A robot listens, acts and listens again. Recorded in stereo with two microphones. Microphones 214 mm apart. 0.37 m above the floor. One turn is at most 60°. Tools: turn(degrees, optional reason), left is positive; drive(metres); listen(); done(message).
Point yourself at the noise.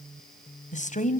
turn(degrees=35, reason="The woman speaking: about 35° left or 145° left.")
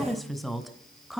done("Found it: a woman speaking, straight ahead.")